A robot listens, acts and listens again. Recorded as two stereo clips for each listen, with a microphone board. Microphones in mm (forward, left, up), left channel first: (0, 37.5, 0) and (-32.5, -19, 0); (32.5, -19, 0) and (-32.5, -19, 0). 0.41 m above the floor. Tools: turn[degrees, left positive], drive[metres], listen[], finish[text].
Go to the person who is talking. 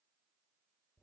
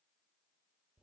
Action: listen[]
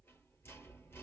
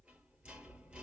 Action: listen[]
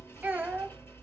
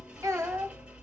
Thought: The child speaking: 175° left.
Action: turn[175]
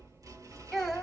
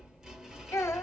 Thought: The child speaking is now 35° right.
Action: turn[-35]
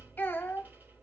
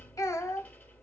Action: drive[1.0]
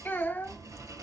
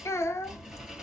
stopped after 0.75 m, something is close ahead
Action: finish[Arrived at the child speaking, straight ahead.]